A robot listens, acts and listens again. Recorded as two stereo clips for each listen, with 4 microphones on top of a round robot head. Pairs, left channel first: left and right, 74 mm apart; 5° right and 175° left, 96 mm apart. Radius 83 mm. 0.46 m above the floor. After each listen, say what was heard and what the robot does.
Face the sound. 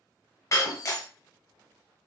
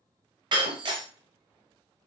The breaking glass: 140° left. Turn 140° left.
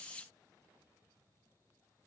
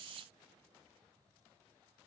I heard breaking glass from this way, but can't make it out now.